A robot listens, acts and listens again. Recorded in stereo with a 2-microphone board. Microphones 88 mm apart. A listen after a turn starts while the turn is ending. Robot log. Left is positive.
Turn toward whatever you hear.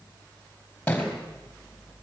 cmd yaw +30
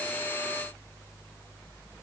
cmd idle
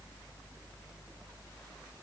end: I heard a thud, but can't make it out now. It was about 15° right or 135° left.